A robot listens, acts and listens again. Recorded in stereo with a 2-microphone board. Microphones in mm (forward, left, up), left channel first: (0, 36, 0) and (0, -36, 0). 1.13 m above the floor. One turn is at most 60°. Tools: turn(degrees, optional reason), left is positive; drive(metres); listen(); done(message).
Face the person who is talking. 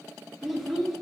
turn(degrees=-30)
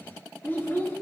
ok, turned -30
turn(degrees=30, reason="So it is at 30° left.")
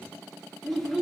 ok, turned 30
done("Facing the child speaking, 1 to 2 m away.")